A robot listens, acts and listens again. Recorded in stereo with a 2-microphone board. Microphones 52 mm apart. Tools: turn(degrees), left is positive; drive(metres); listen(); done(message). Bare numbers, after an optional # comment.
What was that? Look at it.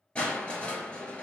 # The crushing: about 20° left or 160° left.
turn(20)
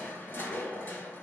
# So it is at 140° left.
turn(140)
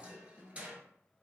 # The crushing is now 25° right.
turn(-25)
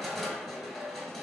done("Facing the crushing.")